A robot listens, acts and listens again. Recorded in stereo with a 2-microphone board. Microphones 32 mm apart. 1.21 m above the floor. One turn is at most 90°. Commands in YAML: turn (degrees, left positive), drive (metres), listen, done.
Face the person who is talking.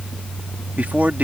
turn: -65
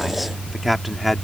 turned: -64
done: "Found it: a man speaking, straight ahead."